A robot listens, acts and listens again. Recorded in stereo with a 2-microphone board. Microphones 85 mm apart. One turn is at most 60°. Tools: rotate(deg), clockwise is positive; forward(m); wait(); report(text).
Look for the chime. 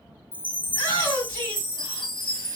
rotate(-60)
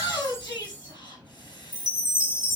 rotate(-35)
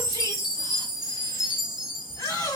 rotate(10)
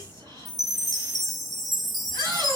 report("Found it: a chime, straight ahead, 1 to 2 m away.")